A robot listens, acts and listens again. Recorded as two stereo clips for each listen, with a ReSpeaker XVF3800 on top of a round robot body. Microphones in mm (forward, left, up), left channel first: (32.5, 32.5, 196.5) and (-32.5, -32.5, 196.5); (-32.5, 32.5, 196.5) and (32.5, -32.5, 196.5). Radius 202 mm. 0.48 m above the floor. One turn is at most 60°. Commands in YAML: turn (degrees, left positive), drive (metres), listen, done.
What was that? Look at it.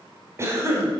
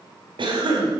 turn: -60
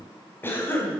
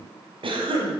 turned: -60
turn: -25
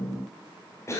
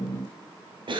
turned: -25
turn: -15
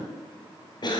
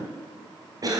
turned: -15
done: "Facing the cough, over 4 m away."